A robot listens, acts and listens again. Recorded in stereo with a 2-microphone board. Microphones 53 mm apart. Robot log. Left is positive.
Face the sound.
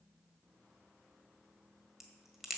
cmd yaw -30
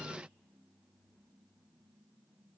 cmd idle
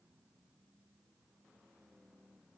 end: I heard a crack, but can't make it out now. It was about 25° left or 145° right.